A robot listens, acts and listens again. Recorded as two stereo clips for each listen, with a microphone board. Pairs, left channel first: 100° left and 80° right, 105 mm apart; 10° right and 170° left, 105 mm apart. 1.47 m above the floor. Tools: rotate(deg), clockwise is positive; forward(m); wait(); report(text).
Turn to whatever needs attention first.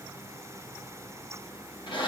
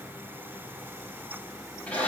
wait()
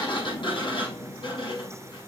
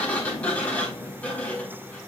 wait()
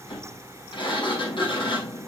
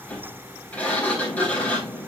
report("I can't make out anything urgent to turn to.")